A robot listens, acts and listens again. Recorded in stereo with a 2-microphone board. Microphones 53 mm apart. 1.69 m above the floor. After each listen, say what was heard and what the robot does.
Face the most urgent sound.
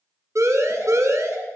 The siren: about 75° right or 105° right. Turn 75° right.
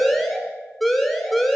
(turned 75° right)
Found it: a siren, straight ahead, over 4 m away.